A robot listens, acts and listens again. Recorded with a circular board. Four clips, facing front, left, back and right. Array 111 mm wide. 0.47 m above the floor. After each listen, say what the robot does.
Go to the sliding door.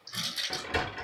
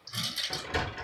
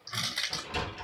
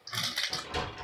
Turn 20° left.
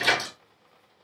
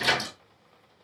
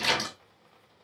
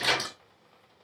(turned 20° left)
Drive 1.0 m forward.
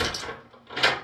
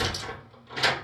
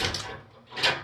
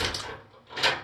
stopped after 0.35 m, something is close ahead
Something is in my way. I am facing the sliding door but have not reached it.